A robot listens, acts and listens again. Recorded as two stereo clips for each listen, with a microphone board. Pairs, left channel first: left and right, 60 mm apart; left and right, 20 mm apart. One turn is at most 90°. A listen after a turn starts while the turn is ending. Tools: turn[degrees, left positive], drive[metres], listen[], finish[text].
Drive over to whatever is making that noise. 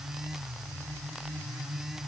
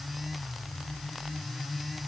Action: listen[]
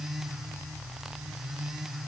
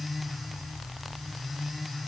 Action: listen[]
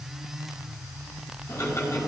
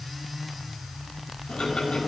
Thought: The ticking: about 60° left or 120° left.
Action: turn[60]
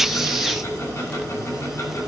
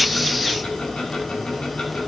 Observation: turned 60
Thought: So it is at 60° left.
Action: turn[60]
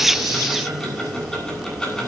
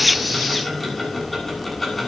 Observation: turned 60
Thought: The ticking is now 10° left.
Action: turn[10]
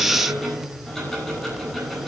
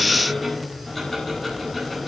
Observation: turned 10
Action: drive[1.0]
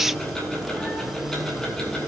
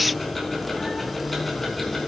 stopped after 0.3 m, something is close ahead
Thought: The ticking is now 10° left.
Action: turn[10]
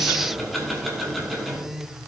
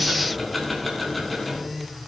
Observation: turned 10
Action: finish[Something is in my way. I am facing the ticking but have not reached it.]